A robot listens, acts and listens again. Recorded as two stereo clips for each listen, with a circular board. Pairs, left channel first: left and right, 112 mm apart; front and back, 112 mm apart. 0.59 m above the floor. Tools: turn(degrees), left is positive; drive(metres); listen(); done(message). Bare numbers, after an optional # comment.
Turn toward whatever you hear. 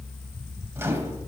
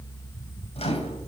# The microwave: 25° right.
turn(-25)
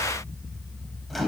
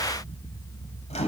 done("Facing the microwave.")